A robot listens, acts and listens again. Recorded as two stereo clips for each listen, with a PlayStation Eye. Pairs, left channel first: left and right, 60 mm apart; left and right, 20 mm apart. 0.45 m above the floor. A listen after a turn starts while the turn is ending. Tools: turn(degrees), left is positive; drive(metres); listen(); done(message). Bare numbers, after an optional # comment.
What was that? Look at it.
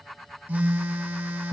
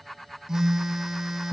# The phone buzzing: about 30° right or 150° right.
turn(-30)
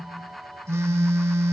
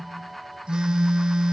# So it is at 115° right.
turn(-115)
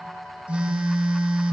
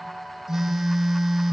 # The phone buzzing is now 25° right.
turn(-25)
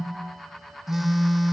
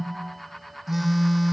done("Facing the phone buzzing.")